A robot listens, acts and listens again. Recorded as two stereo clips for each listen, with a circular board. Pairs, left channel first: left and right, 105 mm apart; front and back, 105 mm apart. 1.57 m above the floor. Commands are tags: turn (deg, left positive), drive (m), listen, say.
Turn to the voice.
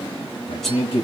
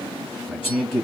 <turn deg="85"/>
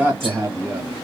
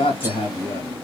<turn deg="-25"/>
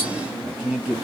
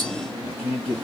<say>Facing the man speaking, 1 to 2 m away.</say>